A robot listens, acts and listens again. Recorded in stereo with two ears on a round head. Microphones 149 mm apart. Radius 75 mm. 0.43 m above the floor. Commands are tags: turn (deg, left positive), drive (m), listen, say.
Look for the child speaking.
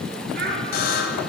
<turn deg="-60"/>
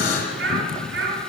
<turn deg="-65"/>
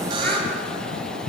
<listen/>
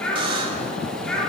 <say>Found it: a child speaking, straight ahead.</say>